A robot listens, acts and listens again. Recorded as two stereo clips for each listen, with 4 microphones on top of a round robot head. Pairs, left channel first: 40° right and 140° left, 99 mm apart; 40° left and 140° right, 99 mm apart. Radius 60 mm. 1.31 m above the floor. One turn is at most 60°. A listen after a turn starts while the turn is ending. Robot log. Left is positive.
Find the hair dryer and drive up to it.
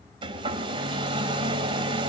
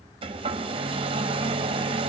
note: The hair dryer: straight behind.
cmd yaw +60
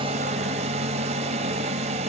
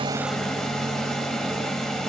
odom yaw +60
note: The hair dryer is now 120° left.
cmd yaw +60
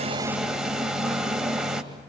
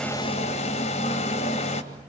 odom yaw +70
note: The hair dryer is now 55° left.
cmd yaw +55
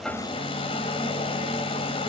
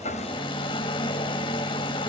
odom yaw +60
cmd fwd 1.0
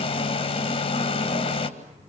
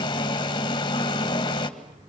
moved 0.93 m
note: The hair dryer is now 10° right.
cmd yaw -10
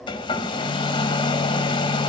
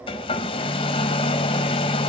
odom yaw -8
cmd fwd 1.0
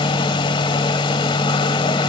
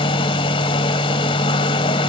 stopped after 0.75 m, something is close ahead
end: Arrived at the hair dryer, straight ahead.